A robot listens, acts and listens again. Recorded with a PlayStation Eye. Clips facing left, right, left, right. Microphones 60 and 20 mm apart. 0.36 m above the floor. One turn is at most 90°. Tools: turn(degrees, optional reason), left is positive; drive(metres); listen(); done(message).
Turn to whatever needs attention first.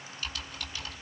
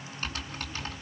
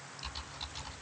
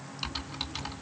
listen()
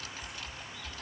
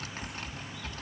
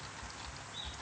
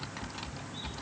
listen()
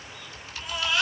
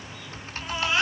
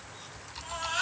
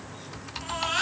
turn(degrees=-30, reason="The baby crying: about 30° right or 150° right.")
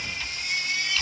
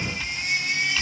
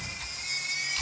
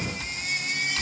turn(degrees=-90, reason="So it is at 120° right.")
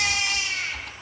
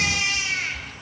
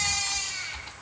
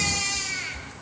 turn(degrees=-40, reason="The baby crying is now 40° right.")
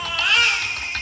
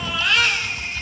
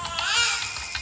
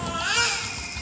done("Facing the baby crying.")